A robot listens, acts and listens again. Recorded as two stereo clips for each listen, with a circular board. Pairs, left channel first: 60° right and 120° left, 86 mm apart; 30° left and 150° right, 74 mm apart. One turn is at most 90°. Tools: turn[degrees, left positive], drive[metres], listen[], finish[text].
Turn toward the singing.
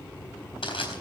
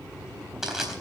Action: listen[]
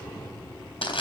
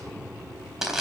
Action: listen[]
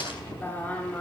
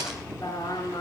Thought: The singing: 10° left.
Action: turn[10]
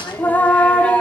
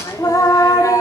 Thought: The singing is now 15° left.
Action: turn[15]
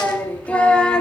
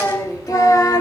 Thought: The singing is now 20° left.
Action: turn[20]
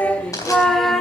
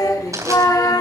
Thought: The singing is now 30° left.
Action: turn[30]
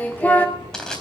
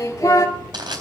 Action: finish[Facing the singing, 1 to 2 m away.]